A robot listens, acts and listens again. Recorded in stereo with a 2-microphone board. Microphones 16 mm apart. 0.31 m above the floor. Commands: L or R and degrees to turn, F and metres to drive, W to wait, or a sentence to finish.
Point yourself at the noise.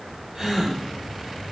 R35
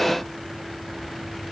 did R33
W
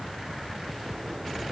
I heard a gasp, but can't make it out now. It was about straight ahead or 115° right.